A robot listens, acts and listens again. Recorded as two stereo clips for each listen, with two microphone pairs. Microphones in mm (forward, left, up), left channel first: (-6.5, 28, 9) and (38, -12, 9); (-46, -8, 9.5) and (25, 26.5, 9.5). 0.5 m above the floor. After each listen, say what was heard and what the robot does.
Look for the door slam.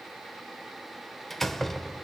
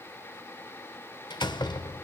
The door slam: 140° right. Turn 140° right.
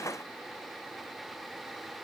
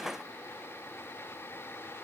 I heard a door slam from this way, but can't make it out now.